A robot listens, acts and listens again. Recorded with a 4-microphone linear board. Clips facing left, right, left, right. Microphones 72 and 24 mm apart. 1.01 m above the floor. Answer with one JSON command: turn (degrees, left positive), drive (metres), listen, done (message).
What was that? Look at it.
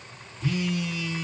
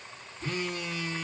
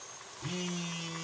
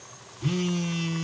{"turn": -40}
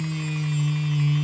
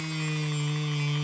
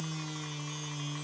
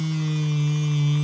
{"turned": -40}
{"turn": -100}
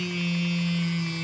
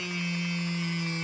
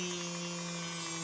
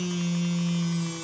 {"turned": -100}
{"turn": -25}
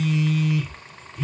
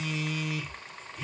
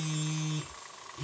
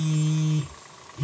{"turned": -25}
{"done": "Found it: a phone buzzing, straight ahead, 1 to 2 m away."}